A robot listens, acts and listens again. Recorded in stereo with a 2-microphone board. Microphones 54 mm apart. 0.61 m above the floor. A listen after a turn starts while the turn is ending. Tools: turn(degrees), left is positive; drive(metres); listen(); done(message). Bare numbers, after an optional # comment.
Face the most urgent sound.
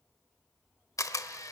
listen()
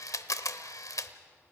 listen()
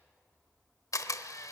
done("I can't make out anything urgent, only a camera shutter.")